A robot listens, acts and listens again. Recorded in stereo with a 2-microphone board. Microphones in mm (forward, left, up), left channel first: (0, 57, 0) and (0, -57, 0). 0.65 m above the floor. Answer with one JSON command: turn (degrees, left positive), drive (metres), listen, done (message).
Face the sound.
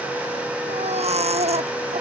{"turn": -70}
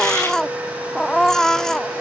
{"done": "Facing the baby crying."}